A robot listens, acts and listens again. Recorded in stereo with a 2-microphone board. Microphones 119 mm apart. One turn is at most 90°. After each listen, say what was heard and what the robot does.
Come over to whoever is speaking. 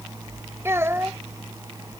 The child speaking: about 20° right or 160° right. Turn 20° right.
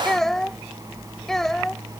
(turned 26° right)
Drive 1.0 m forward.
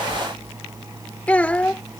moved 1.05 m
The child speaking is now 10° left. Turn 10° left.
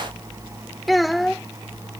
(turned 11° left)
Drive 1.0 m forward.
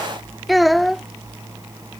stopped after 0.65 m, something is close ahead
Arrived at the child speaking, straight ahead.